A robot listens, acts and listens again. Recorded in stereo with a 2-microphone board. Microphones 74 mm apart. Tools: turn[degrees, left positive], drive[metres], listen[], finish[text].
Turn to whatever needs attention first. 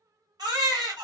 Thought: The baby crying: about 70° right or 110° right.
Action: turn[-70]
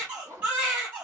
Thought: So it is at 20° right.
Action: turn[-20]
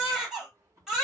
Action: finish[Found it: a baby crying, straight ahead, 1 to 2 m away.]